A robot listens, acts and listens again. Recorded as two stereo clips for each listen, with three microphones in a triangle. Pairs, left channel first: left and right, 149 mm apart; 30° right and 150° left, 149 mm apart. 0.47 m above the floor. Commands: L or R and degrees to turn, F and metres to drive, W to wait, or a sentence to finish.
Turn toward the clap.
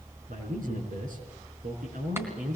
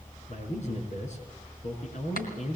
R15
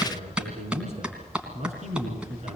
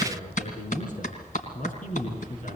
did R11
Found it: a clap, straight ahead, 2 to 4 m away.